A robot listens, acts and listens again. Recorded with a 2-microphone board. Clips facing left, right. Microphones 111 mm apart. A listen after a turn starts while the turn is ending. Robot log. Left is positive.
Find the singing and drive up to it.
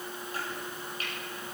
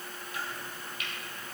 cmd idle
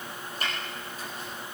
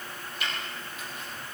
cmd idle
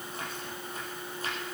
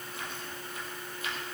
end: I can't make out singing, only chopping.